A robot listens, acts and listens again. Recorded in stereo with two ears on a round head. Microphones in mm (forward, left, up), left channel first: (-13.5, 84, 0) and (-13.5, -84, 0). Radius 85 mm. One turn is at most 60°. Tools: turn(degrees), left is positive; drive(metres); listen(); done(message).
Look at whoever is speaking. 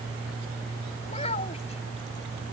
turn(degrees=35)
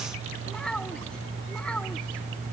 done("Found it: a child speaking, straight ahead.")